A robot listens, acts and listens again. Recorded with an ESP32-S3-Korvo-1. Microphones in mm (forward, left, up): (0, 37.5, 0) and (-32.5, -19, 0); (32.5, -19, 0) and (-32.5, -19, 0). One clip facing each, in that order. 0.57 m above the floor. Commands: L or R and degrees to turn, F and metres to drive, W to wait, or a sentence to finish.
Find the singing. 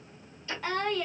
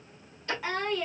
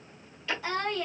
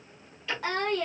L160
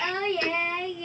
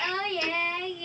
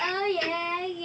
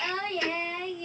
R10
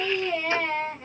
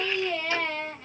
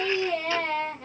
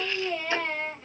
Facing the singing.